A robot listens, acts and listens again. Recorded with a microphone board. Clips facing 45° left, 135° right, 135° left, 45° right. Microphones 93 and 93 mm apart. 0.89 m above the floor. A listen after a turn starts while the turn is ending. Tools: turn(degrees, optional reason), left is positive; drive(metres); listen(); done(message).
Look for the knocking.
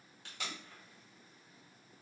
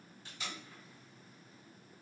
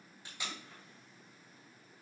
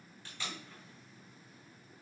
listen()
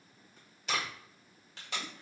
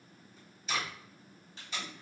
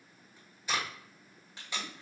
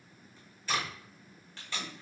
listen()
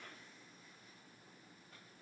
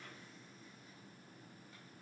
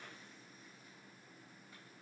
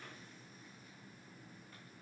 done("I can't make out knocking, only tape being pulled.")